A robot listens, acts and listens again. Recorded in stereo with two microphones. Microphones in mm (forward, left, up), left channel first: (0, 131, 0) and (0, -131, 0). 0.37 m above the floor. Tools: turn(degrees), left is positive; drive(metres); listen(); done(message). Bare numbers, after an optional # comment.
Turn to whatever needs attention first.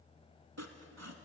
listen()
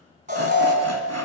# The alarm: about 30° right or 150° right.
turn(-30)
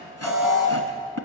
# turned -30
done("Facing the alarm.")